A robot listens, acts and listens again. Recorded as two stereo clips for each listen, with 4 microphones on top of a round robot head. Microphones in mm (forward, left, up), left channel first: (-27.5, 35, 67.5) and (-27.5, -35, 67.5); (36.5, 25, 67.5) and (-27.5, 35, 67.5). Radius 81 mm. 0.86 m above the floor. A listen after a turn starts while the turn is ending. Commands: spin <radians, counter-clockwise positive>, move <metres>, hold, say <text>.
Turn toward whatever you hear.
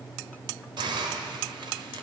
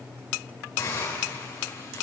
spin -1.22
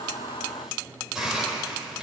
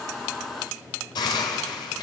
say Facing the hiss.